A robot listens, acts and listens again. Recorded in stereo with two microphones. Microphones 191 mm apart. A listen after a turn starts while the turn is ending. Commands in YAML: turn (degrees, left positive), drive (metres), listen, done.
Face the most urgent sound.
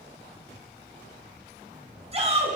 turn: -35
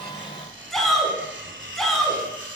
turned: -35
done: "Facing the shout."